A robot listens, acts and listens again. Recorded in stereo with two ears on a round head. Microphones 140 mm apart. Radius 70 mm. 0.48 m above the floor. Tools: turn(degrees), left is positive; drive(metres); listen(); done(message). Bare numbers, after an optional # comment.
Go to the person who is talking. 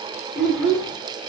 turn(-30)
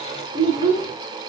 # So it is at 145° right.
turn(-145)
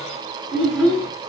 drive(1.0)
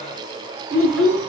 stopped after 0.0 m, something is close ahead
# The child speaking is now 10° left.
turn(10)
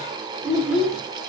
done("Something is in my way. I am facing the child speaking but have not reached it.")